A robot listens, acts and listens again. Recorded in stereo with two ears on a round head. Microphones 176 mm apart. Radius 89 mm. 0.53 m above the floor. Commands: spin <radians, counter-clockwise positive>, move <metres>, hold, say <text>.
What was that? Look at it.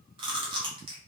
spin -0.44
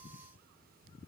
hold
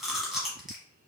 say Found it: chewing, straight ahead, under 1 m away.